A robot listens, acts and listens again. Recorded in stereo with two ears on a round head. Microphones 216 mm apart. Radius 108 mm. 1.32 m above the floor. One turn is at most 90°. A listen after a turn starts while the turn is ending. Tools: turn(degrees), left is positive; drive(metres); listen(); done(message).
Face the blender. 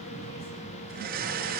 turn(degrees=-40)
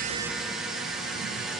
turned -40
done("Facing the blender, over 4 m away.")